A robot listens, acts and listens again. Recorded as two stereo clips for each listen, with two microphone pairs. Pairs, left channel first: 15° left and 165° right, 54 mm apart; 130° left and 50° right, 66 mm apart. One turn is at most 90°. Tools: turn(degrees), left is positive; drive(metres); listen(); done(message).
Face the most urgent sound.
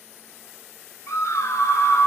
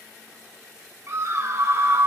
turn(degrees=-15)
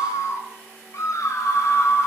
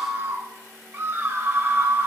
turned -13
done("Found it: a scream, straight ahead, 2 to 4 m away.")